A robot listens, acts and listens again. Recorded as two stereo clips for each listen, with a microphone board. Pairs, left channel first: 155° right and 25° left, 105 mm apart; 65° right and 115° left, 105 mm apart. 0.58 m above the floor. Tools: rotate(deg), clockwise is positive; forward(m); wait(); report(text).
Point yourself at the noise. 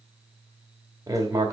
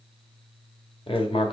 rotate(35)
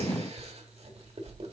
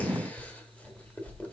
rotate(-10)
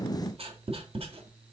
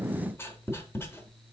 report("Found it: writing, straight ahead, 1 to 2 m away.")